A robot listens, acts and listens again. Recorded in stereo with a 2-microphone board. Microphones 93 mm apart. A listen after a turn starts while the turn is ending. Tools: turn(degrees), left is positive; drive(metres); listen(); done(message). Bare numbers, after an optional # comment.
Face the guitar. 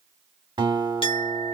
# The guitar: about 55° right or 125° right.
turn(-55)
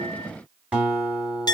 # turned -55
# So it is at 10° right.
turn(-10)
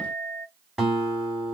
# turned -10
done("Found it: a guitar, straight ahead, 2 to 4 m away.")